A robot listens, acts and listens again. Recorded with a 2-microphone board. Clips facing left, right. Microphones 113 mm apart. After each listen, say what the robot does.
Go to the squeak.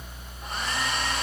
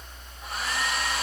Keep listening.
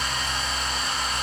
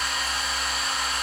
Keep listening.
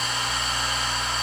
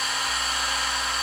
I can't make out a squeak to turn to.